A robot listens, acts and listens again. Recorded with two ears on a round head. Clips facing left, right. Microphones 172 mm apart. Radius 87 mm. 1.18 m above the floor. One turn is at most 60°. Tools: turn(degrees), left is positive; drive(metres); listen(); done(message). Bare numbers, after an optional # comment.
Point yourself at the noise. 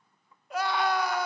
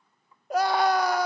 # The scream: about 35° right or 145° right.
turn(-35)
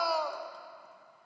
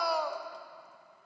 done("Found it: a scream, straight ahead.")